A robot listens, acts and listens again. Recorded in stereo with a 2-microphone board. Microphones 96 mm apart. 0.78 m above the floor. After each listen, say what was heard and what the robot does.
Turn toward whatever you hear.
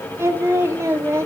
The singing: about 30° right or 150° right. Turn 30° right.
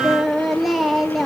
Found it: singing, straight ahead, 1 to 2 m away.